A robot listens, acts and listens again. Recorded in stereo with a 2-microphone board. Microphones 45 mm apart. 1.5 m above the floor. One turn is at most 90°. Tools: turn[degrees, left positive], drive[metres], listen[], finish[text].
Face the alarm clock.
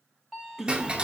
Action: turn[30]
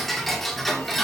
Action: listen[]
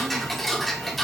Action: listen[]
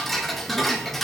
Action: finish[I heard an alarm clock, but can't make it out now. It was about 25° right or 145° left.]